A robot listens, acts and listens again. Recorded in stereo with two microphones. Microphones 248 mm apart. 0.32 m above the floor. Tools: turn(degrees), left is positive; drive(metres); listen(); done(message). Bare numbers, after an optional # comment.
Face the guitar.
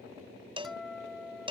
turn(30)
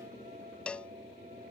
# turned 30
listen()
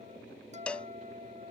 # So it is at 30° right.
turn(-30)
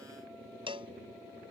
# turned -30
listen()
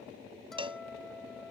done("Found it: a guitar, straight ahead.")